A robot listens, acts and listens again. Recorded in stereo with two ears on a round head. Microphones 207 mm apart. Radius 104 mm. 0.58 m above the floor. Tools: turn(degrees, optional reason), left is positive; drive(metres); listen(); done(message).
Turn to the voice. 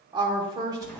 turn(degrees=-20, reason="The woman speaking: about 20° right or 160° right.")
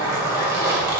listen()
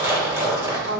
listen()
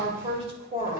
turn(degrees=-25, reason="The woman speaking: about 25° right or 155° right.")
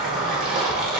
listen()
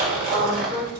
turn(degrees=-130, reason="So it is at 130° right.")
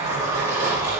listen()
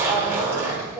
listen()
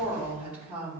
done("Found it: a woman speaking, straight ahead.")